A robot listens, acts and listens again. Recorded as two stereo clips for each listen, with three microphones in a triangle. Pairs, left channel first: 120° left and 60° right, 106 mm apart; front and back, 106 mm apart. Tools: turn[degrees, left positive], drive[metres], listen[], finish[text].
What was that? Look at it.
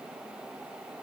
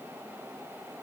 Action: listen[]
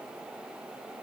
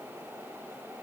Action: listen[]
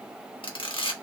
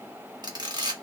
Thought: The camera shutter: 140° left.
Action: turn[140]
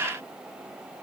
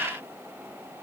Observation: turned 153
Thought: Nothing new. It was at 15° right.
Action: turn[-15]
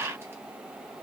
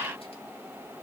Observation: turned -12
Action: listen[]
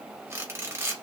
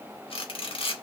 Action: finish[Facing the camera shutter, 1 to 2 m away.]